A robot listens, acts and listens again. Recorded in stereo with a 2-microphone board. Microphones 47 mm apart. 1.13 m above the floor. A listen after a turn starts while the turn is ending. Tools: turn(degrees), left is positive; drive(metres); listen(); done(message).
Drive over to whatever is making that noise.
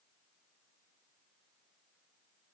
listen()
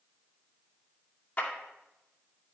turn(degrees=35)
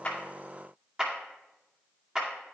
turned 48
turn(degrees=-15)
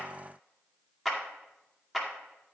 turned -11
drive(metres=1.0)
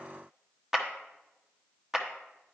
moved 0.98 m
turn(degrees=-10)
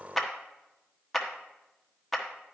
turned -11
drive(metres=1.0)
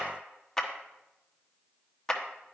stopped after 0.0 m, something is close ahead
turn(degrees=10)
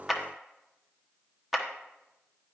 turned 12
done("Arrived at the clap, straight ahead.")